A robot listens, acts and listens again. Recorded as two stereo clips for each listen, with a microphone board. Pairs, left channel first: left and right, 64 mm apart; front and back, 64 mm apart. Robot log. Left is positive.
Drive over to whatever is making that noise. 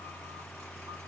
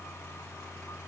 cmd idle
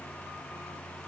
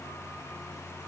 cmd idle
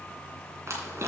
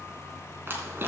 note: The crumpling: 130° right.
cmd yaw -130
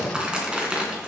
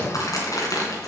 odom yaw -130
note: The crumpling is now 15° right.
cmd yaw -15
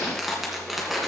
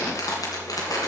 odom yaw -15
cmd fwd 1.0
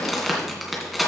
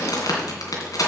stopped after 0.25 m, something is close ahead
end: Blocked. The crumpling is further on, straight ahead.